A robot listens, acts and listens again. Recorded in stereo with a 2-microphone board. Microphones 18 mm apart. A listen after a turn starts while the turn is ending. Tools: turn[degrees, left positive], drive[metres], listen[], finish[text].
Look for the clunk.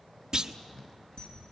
Thought: The clunk: about 40° right or 140° right.
Action: turn[-40]
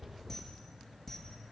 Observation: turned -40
Action: listen[]
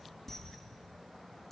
Action: finish[I heard a clunk, but can't make it out now. It was about straight ahead or 100° right.]